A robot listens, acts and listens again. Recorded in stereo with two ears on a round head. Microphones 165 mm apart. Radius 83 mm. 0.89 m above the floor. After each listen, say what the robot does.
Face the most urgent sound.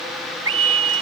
Turn 90° right.
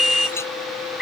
Facing the scream.